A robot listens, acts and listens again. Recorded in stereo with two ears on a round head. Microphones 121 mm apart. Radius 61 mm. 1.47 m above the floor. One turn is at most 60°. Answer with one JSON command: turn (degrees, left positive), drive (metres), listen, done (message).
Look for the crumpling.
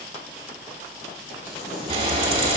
{"turn": 60}
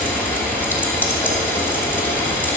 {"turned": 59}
{"turn": 30}
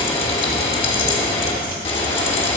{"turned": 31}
{"listen": true}
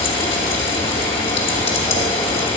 {"done": "Facing where the crumpling came from. I can't hear it now."}